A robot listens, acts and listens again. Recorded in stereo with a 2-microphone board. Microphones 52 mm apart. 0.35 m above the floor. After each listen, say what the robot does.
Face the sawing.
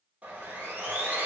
Turn 25° right.
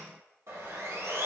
Turn 125° right.
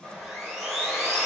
Turn 10° right.
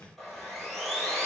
Facing the sawing, 2 to 4 m away.